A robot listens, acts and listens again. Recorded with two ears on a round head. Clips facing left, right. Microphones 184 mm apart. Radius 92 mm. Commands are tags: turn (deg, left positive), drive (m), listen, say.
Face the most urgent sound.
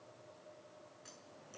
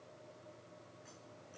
<listen/>
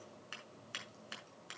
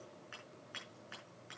<listen/>
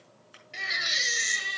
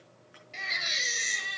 <turn deg="30"/>
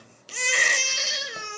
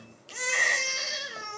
<turn deg="140"/>
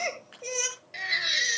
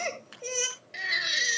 <say>Facing the baby crying, 1 to 2 m away.</say>